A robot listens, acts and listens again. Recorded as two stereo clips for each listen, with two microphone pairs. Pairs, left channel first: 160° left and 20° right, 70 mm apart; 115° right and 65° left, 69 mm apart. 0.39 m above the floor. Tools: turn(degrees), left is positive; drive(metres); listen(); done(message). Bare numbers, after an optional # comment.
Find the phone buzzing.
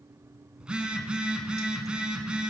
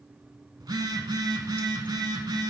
# The phone buzzing: 55° left.
turn(55)
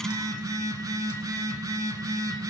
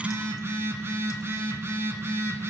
# The phone buzzing is now 10° left.
turn(10)
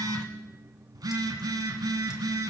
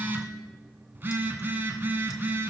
done("Facing the phone buzzing, 1 to 2 m away.")